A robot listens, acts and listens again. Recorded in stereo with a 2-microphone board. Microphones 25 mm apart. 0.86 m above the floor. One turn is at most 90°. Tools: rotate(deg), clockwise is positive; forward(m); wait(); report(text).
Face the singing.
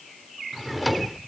wait()
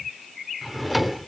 wait()
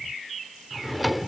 report("I can't make out singing, only a drawer and a cupboard door.")